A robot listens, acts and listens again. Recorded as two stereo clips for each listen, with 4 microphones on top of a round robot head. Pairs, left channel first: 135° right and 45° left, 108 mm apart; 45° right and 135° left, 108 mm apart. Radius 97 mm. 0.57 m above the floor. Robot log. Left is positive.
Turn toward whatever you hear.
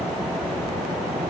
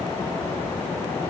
cmd idle
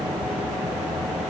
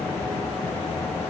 cmd idle
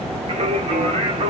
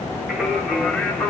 note: The singing: 35° left.
cmd yaw +35
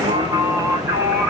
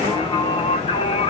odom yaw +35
note: The singing is now 20° right.
cmd yaw -20
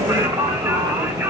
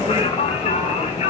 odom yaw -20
note: The singing is now 20° right.
cmd yaw -20
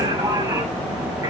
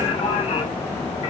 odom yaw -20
end: Facing the singing.